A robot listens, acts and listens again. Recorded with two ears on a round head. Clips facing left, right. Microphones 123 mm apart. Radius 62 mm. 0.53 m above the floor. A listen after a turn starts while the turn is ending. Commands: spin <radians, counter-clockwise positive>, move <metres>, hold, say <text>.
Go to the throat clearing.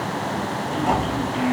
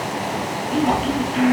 spin -0.87
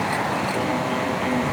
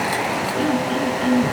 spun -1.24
spin -1.05
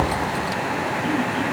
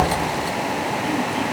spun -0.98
hold
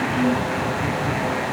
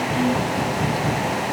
move 1.0
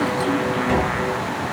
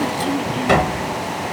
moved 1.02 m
hold
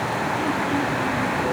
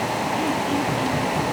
hold
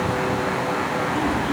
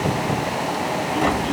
say I heard throat clearing from this way, but can't make it out now. I did not reach it.